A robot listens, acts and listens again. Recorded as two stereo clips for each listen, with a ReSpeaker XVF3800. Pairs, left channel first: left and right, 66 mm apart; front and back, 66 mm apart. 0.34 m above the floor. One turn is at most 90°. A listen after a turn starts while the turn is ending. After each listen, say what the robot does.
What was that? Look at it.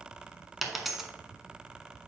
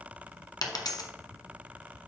Found it: a dropped coin, straight ahead, 1 to 2 m away.